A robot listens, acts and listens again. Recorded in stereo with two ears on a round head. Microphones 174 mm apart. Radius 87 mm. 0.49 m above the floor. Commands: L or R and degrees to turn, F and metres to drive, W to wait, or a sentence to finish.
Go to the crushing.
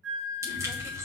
R15
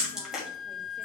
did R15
W
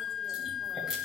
W
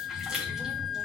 F1.0
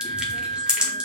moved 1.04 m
F1.0
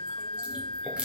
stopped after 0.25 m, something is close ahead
W
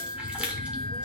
R10
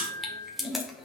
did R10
I am next to the crushing.